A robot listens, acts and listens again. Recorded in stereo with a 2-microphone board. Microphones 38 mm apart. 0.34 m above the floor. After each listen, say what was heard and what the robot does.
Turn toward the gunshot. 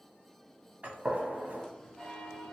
The gunshot: about 45° right or 135° right. Turn 45° right.
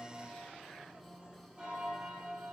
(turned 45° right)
Keep listening.
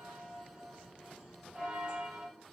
I heard a gunshot, but can't make it out now. It was about straight ahead or 90° right.